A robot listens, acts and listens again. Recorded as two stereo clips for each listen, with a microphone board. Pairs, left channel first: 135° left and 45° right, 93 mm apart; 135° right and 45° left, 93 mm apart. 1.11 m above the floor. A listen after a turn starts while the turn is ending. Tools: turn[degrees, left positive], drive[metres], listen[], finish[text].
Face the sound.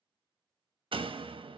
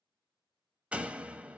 Thought: The door slam: 30° right.
Action: turn[-30]
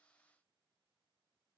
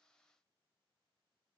Action: finish[Facing where the door slam came from. I can't hear it now.]